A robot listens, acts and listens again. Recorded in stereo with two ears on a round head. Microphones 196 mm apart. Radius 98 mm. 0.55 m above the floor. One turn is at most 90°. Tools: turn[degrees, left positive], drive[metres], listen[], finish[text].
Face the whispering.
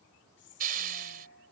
Thought: The whispering: about 55° left or 125° left.
Action: turn[55]
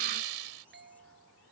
Action: listen[]
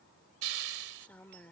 Thought: So it is at 10° left.
Action: turn[10]
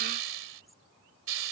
Action: listen[]
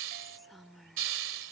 Action: finish[Found it: whispering, straight ahead.]